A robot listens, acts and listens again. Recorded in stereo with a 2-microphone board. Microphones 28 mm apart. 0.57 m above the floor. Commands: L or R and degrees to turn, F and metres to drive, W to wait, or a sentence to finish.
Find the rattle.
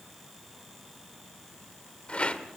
L45
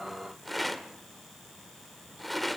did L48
Facing the rattle, 1 to 2 m away.